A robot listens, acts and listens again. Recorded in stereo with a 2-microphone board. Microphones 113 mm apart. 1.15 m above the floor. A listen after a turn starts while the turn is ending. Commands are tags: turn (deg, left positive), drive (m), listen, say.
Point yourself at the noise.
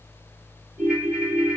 <turn deg="-30"/>
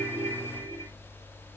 <listen/>
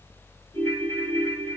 <turn deg="25"/>
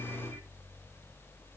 <listen/>
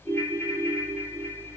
<turn deg="10"/>
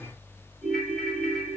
<say>Found it: a ringtone, straight ahead.</say>